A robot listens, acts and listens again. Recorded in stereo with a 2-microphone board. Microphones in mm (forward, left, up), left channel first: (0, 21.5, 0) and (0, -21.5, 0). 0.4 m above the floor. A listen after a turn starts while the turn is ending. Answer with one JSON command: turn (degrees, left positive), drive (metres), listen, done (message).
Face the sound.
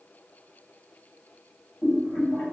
{"turn": 60}
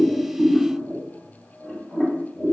{"done": "Facing the boiling."}